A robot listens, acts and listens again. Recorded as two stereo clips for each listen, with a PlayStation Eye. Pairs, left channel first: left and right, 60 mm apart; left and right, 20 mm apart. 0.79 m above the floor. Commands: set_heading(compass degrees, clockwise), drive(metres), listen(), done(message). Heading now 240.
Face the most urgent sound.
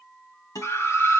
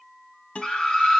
set_heading(190)
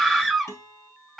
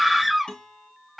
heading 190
done("Found it: a scream, straight ahead, 2 to 4 m away.")